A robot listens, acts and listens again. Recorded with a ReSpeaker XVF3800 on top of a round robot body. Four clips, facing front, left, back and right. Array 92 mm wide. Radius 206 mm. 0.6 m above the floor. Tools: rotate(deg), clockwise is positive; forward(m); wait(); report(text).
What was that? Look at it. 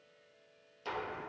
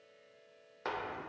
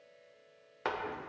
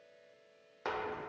rotate(175)
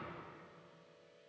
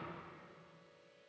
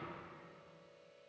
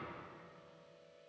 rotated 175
report("I heard a door slam from this way, but can't make it out now.")